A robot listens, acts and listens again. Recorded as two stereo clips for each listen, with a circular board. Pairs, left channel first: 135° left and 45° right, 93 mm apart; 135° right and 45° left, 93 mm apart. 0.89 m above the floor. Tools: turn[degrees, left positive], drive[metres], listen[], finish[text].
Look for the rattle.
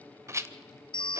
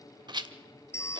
Thought: The rattle: 15° left.
Action: turn[15]
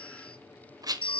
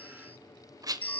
Action: finish[Found it: a rattle, straight ahead, 1 to 2 m away.]